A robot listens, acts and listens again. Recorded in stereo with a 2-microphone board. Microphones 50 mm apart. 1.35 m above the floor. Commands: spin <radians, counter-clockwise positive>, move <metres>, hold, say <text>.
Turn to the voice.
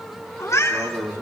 spin -1.57
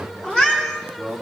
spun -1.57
spin 0.17
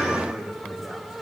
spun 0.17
say Found it: a man speaking, straight ahead, 2 to 4 m away.